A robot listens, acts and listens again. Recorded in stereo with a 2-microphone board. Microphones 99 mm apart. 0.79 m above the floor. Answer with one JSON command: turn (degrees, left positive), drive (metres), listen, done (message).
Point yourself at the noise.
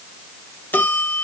{"turn": 20}
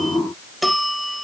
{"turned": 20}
{"done": "Found it: a bell, straight ahead."}